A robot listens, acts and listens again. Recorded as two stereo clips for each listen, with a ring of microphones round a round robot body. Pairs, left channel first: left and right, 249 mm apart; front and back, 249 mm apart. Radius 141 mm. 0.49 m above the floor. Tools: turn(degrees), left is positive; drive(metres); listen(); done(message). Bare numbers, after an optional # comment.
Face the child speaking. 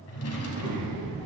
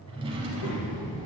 # The child speaking: 10° right.
turn(-10)
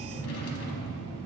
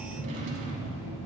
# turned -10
done("Found it: a child speaking, straight ahead.")